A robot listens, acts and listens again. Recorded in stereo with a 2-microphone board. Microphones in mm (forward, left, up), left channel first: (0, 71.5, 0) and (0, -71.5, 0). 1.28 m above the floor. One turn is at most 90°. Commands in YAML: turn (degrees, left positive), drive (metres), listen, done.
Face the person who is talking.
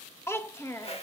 turn: 20
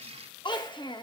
turn: 90
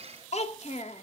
turn: 60
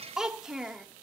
done: "Facing the child speaking."